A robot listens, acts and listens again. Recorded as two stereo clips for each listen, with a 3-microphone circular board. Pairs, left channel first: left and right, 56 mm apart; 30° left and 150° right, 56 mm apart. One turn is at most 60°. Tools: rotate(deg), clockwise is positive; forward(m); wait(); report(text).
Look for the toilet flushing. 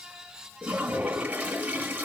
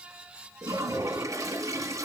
rotate(60)
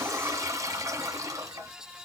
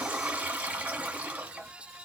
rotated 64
rotate(60)
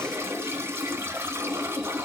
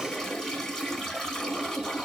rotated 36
rotate(50)
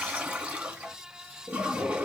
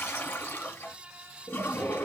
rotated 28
rotate(20)
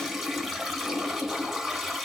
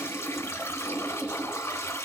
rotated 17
report("Found it: a toilet flushing, straight ahead.")